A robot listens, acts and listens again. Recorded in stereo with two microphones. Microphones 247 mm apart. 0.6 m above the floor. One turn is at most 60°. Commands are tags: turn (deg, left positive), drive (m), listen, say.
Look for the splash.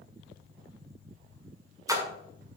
<turn deg="-30"/>
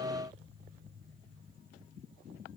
<listen/>
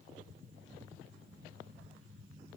<say>I heard a splash, but can't make it out now. It was about 15° left or 135° right.</say>